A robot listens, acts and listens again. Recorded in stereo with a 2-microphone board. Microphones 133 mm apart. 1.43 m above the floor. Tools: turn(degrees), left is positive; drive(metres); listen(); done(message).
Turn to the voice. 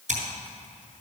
listen()
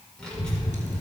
turn(degrees=30)
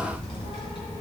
turn(degrees=135)
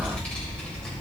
done("Facing the child speaking.")